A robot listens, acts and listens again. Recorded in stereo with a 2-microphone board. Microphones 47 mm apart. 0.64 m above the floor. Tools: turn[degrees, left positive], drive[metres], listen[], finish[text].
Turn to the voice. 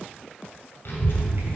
Thought: The child speaking: about 60° left or 120° left.
Action: turn[60]
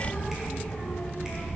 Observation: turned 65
Thought: So it is at 55° left.
Action: turn[55]
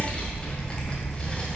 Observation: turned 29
Thought: The child speaking is now 25° left.
Action: turn[25]
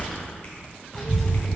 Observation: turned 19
Action: finish[Facing the child speaking.]